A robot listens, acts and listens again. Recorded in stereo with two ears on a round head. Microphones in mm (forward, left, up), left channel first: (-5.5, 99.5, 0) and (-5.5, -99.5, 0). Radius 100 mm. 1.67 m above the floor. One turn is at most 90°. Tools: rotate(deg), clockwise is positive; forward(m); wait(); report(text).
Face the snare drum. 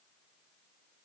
wait()
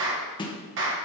rotate(-20)
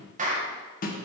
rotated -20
rotate(-90)
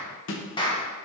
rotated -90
rotate(-75)
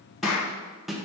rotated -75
report("Found it: a snare drum, straight ahead.")